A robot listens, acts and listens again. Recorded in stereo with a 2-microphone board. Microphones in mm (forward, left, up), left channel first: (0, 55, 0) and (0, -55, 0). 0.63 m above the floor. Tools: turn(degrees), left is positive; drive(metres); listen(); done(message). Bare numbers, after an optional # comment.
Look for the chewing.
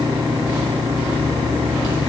listen()
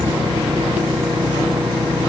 listen()
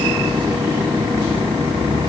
done("I can't make out chewing to turn to.")